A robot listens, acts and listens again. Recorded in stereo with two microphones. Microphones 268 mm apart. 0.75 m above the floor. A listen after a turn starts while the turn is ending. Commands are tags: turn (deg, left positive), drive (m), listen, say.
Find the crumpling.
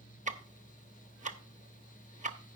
<listen/>
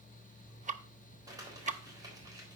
<turn deg="-30"/>
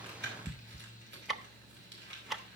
<turn deg="-135"/>
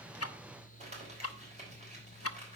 <turn deg="-25"/>
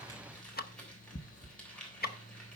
<say>Facing the crumpling, 2 to 4 m away.</say>